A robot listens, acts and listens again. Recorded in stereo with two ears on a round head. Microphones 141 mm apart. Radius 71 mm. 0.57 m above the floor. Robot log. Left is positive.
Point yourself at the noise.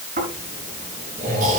note: The snoring: about 55° right or 125° right.
cmd yaw -55
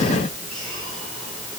cmd idle
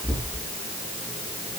end: Facing the snoring, over 4 m away.